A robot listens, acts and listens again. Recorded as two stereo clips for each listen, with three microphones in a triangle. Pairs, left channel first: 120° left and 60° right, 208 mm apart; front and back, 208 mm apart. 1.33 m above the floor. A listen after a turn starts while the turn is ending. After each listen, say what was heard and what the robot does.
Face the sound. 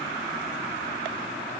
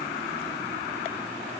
Keep listening.
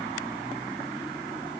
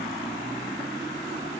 Keep listening.
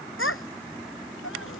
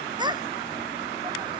The child speaking: 110° left. Turn 110° left.
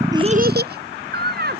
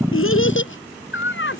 The child speaking is now 20° right. Turn 20° right.
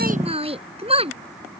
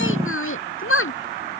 Found it: a child speaking, straight ahead.